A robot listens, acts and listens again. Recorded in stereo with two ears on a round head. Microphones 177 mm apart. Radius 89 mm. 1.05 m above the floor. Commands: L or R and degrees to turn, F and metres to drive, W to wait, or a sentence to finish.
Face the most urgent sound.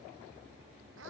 W
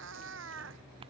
W
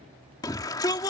L20
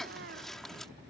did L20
Facing the shout.